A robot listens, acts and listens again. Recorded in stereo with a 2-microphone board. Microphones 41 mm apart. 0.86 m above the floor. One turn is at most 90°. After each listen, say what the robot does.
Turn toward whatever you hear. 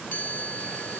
Turn 45° left.
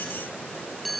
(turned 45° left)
Found it: a chime, straight ahead.